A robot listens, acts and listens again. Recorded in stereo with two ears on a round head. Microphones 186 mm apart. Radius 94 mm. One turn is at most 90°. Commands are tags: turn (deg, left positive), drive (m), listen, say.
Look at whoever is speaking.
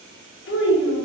<turn deg="60"/>
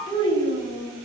<turn deg="20"/>
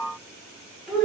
<say>Found it: a child speaking, straight ahead.</say>